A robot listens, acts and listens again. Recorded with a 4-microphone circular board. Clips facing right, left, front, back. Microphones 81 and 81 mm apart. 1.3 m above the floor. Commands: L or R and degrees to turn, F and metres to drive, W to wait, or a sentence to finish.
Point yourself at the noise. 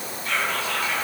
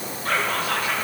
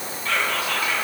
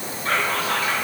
L125
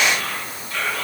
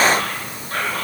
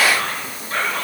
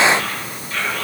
L50
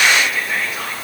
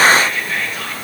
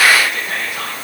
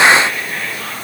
R10
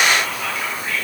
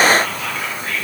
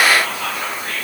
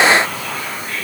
Found it: whispering, straight ahead, 1 to 2 m away.